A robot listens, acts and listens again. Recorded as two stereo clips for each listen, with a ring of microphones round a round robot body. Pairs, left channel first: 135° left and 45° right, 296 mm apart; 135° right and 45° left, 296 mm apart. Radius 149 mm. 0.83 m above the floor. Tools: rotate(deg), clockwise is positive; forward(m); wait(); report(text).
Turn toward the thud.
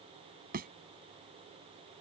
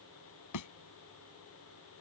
rotate(105)
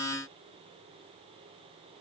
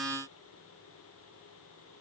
report("I heard a thud from this way, but can't make it out now.")